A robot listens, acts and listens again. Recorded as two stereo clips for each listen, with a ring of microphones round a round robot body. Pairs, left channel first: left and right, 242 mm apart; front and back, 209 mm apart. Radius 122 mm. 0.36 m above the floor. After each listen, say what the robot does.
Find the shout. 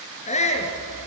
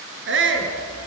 Turn 155° left.
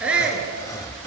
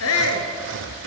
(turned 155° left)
Facing the shout.